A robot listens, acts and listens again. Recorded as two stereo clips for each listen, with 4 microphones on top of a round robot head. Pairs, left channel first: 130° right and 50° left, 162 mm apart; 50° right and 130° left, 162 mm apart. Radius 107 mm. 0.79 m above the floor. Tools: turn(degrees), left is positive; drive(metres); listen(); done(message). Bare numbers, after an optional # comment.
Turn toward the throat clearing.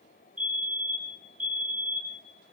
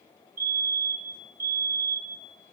listen()
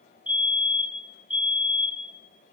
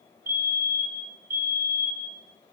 listen()
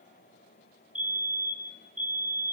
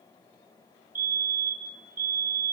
done("I can't make out throat clearing, only a fire alarm.")